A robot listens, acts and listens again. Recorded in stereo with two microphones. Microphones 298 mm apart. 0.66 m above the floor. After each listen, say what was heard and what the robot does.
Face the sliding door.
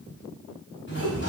The sliding door: about 40° left or 140° left. Turn 40° left.
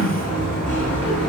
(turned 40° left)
So it is at 100° left. Turn 100° left.
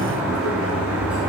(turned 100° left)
Facing the sliding door, over 4 m away.